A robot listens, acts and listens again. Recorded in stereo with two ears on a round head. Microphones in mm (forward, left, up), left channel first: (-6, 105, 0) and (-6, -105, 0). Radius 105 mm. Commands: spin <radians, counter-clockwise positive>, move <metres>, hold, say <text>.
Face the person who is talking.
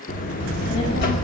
spin 0.96
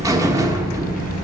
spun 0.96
spin 1.22
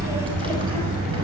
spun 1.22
hold
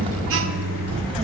spin -0.44
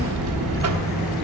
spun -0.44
say Facing the child speaking.